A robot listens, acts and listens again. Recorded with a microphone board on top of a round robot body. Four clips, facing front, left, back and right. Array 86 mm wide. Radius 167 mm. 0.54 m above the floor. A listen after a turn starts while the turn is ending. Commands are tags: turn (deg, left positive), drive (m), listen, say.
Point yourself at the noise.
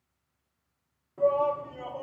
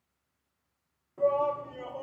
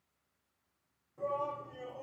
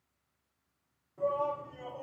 <turn deg="30"/>
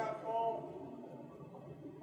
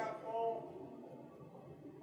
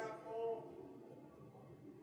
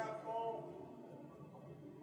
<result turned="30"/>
<say>Found it: a shout, straight ahead.</say>